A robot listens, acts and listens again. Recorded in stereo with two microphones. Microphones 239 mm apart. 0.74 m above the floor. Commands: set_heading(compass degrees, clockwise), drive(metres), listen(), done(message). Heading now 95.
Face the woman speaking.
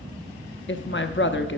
set_heading(45)
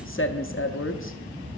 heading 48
set_heading(338)
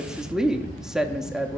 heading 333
done("Found it: a woman speaking, straight ahead, under 1 m away.")